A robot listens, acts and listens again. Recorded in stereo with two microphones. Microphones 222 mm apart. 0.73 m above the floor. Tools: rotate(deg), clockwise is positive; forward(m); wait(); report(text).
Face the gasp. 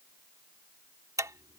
wait()
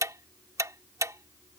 wait()
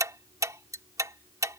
report("I can't make out a gasp to turn to.")